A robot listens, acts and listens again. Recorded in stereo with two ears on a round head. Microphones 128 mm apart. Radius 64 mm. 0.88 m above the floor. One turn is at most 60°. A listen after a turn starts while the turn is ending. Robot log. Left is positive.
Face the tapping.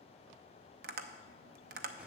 note: The tapping: about 70° right or 110° right.
cmd yaw -60
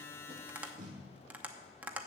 note: So it is at 10° right.
cmd yaw -10
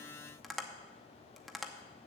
end: Found it: tapping, straight ahead, under 1 m away.